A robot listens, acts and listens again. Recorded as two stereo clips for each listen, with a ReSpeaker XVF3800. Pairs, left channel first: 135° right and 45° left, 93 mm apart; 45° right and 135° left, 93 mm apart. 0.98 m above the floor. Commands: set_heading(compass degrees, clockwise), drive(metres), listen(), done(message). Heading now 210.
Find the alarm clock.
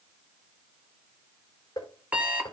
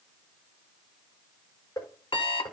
set_heading(240)
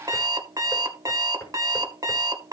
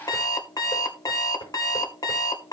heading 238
done("Facing the alarm clock, 1 to 2 m away.")